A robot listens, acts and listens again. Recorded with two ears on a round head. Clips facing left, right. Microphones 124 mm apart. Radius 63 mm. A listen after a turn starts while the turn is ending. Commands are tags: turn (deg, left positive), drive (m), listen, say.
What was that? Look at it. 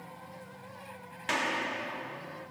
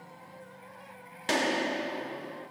<turn deg="-45"/>
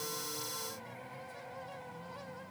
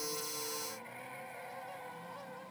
<listen/>
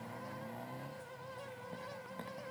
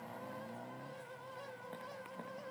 <say>I heard a gunshot, but can't make it out now. It was about straight ahead or 90° right.</say>